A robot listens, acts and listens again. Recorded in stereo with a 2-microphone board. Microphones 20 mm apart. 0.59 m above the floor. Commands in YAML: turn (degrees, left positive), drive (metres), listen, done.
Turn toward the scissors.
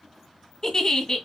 listen: true
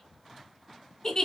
listen: true
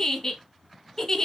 done: "I can't make out scissors, only a giggle."